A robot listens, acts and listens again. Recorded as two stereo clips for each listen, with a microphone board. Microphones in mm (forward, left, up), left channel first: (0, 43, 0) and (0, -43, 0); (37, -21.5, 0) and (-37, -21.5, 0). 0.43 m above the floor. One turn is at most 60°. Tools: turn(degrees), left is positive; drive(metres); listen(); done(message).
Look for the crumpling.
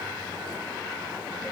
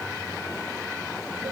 listen()
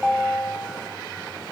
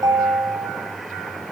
listen()
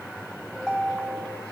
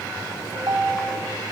done("I can't make out crumpling to turn to.")